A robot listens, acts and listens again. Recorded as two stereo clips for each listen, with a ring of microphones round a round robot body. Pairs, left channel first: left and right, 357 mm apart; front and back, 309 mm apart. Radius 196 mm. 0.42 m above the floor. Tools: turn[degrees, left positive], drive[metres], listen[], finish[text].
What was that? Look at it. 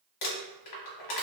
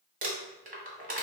Thought: The crumpling: 115° left.
Action: turn[115]
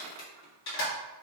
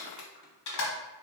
Thought: The crumpling is now 35° left.
Action: turn[35]
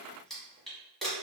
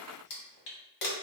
Action: finish[Facing the crumpling.]